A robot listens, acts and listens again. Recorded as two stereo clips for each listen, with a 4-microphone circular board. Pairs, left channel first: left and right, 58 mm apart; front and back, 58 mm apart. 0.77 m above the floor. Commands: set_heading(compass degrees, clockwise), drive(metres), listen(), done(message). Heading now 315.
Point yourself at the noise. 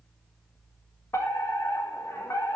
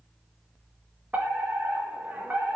set_heading(190)
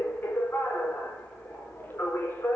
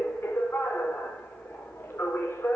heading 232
set_heading(192)
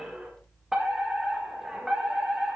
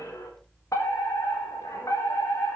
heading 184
set_heading(194)
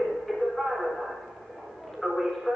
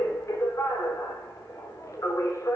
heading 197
done("Facing the fire alarm, over 4 m away.")